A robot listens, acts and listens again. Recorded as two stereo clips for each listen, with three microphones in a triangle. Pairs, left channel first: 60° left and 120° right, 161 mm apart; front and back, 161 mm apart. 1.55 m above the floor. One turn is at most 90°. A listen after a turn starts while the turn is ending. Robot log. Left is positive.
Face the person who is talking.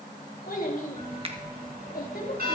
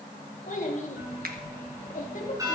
note: The child speaking: 35° left.
cmd yaw +35
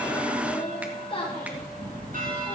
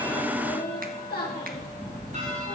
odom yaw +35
end: Facing the child speaking.